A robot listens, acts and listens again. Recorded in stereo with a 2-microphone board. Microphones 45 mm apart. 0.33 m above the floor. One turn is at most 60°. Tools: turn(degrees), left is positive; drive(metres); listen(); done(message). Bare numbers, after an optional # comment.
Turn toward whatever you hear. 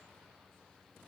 listen()
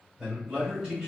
turn(-30)
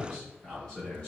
# So it is at 25° left.
turn(25)
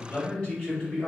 # The man speaking is now 30° left.
turn(30)
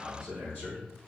# The man speaking is now 25° left.
turn(25)
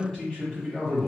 # The man speaking is now 15° left.
turn(15)
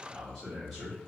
done("Facing the man speaking, 1 to 2 m away.")